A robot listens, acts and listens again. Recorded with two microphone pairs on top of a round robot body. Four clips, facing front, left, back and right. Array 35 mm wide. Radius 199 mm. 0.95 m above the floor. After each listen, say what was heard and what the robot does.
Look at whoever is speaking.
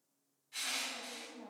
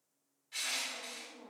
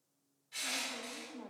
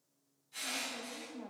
The woman speaking: 160° right. Turn 160° right.
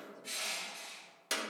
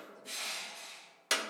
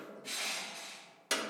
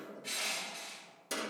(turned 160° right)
Keep listening.
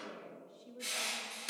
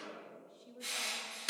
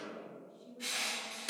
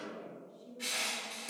The woman speaking is now 20° left. Turn 20° left.
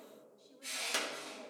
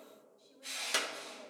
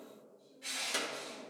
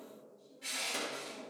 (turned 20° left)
The woman speaking is now 15° left. Turn 15° left.
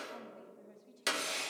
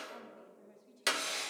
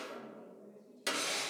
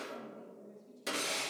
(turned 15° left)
The woman speaking is now 10° left. Turn 10° left.
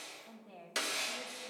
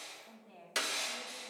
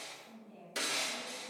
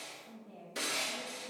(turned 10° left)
Found it: a woman speaking, straight ahead.